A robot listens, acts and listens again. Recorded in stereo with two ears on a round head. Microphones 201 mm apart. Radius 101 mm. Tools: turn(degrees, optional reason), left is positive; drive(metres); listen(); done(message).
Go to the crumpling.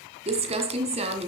turn(degrees=-30, reason="The crumpling: about 30° right or 150° right.")
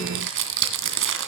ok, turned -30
turn(degrees=-120, reason="So it is at 120° right.")
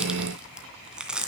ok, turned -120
drive(metres=1.0)
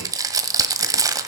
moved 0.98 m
turn(degrees=-15, reason="The crumpling is now 15° right.")
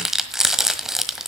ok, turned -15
drive(metres=1.0)
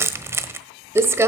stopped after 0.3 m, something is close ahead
turn(degrees=-10, reason="The crumpling is now 10° right.")
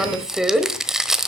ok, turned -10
done("Arrived at the crumpling, straight ahead.")